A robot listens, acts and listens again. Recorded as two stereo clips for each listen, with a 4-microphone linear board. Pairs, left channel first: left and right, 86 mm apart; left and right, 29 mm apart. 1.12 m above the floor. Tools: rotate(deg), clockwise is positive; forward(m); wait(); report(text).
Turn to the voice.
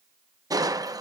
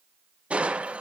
wait()
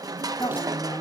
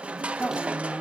rotate(-50)
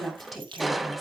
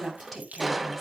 report("Found it: a woman speaking, straight ahead.")